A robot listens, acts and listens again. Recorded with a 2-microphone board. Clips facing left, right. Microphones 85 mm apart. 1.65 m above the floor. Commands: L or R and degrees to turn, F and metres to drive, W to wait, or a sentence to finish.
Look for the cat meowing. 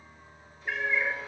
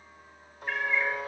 L30
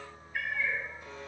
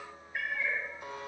R25
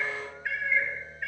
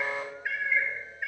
R10
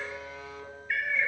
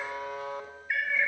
Facing the cat meowing.